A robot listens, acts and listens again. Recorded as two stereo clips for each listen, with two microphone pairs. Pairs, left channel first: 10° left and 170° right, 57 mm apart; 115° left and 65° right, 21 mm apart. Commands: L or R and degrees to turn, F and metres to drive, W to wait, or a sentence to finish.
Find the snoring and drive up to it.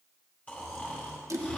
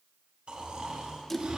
R45
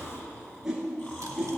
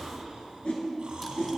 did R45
R35
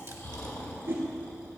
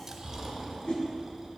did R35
F1.0
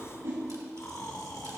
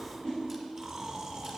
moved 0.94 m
F1.0
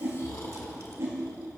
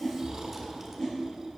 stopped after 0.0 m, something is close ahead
Arrived at the snoring, straight ahead.